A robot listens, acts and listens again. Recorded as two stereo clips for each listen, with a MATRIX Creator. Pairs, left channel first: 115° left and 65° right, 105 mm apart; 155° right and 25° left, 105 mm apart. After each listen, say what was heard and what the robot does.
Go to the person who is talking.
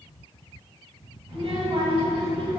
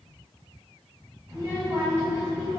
The child speaking: 40° right. Turn 40° right.
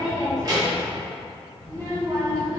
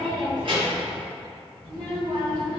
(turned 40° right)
The child speaking is now 15° right. Turn 15° right.
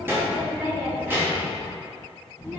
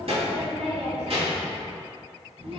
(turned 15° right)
Drive 1.0 m forward.
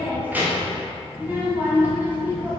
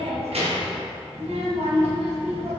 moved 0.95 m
Drive 1.0 m forward.
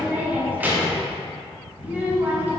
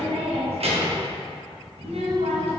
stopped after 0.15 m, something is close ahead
Arrived at the child speaking, straight ahead.